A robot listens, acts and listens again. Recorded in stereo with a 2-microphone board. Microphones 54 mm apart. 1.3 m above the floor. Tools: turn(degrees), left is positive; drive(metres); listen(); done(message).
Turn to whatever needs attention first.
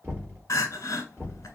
turn(degrees=90)
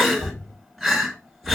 done("Found it: crying, straight ahead.")